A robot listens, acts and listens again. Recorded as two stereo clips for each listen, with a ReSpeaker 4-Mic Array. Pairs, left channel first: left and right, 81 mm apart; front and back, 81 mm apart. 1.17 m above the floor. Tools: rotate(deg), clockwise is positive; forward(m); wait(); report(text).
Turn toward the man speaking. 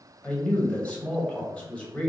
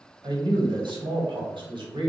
rotate(-165)
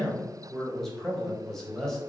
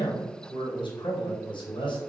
report("Found it: a man speaking, straight ahead.")